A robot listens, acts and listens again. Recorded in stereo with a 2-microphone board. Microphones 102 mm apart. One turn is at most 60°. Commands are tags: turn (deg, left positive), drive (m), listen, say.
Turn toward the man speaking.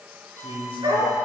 <turn deg="60"/>
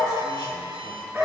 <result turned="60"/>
<listen/>
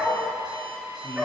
<turn deg="60"/>
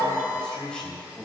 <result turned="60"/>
<turn deg="15"/>
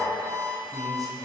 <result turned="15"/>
<say>Facing the man speaking.</say>